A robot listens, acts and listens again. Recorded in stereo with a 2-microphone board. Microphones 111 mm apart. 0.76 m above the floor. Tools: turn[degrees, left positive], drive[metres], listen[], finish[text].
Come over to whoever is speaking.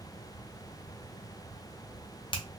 Action: listen[]
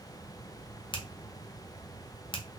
Action: listen[]
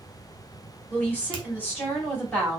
Thought: The woman speaking: about 15° left or 165° left.
Action: turn[15]
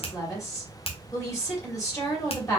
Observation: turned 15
Thought: So it is at 150° left.
Action: turn[150]
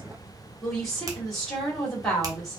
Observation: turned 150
Action: drive[1.0]
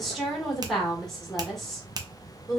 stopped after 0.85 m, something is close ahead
Action: finish[Arrived at the woman speaking, straight ahead.]